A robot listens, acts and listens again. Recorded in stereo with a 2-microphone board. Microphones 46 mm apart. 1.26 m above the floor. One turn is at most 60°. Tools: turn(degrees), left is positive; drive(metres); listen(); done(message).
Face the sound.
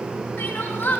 turn(degrees=50)
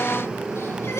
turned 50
listen()
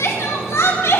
turn(degrees=60)
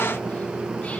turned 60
turn(degrees=20)
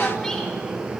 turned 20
listen()
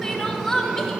turn(degrees=10)
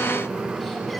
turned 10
listen()
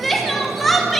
done("Facing the crying, 2 to 4 m away.")